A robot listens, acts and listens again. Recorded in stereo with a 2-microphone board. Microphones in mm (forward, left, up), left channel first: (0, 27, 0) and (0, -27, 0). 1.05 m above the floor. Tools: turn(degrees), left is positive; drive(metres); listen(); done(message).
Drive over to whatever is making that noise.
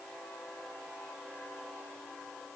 listen()
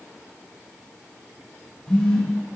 turn(degrees=30)
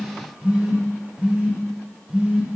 turn(degrees=-15)
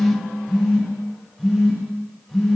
drive(metres=1.0)
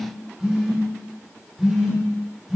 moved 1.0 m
drive(metres=1.0)
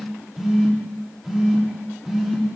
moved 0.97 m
drive(metres=1.0)
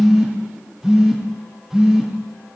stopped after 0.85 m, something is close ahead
turn(degrees=-10)
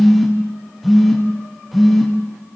done("Arrived at the phone buzzing, straight ahead.")